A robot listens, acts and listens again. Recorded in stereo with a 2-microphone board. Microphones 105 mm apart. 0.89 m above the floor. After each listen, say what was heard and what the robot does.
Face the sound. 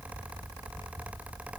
Keep listening.
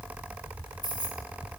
The keys jangling: about 45° right or 135° right. Turn 45° right.
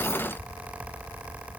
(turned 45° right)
Keep listening.
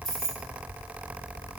Found it: keys jangling, straight ahead, 1 to 2 m away.